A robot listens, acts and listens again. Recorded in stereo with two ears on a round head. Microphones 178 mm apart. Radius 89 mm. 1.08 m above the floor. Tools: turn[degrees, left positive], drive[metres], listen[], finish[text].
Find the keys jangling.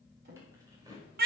Thought: The keys jangling: about 20° right or 160° right.
Action: turn[-20]
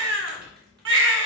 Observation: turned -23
Action: listen[]
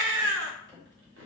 Thought: So it is at 110° right.
Action: turn[-110]
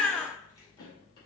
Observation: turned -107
Action: listen[]
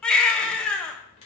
Action: listen[]
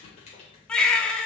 Thought: The keys jangling is now 30° left.
Action: turn[30]
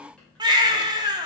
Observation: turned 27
Action: listen[]
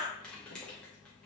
Action: finish[Found it: keys jangling, straight ahead, 2 to 4 m away.]